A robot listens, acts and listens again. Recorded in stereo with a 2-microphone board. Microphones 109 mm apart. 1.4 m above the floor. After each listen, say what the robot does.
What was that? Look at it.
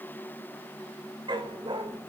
Turn 45° right.
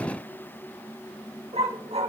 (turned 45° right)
Turn 105° right.
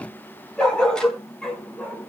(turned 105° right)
Turn 10° left.
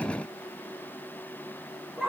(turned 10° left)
Facing the dog barking, over 4 m away.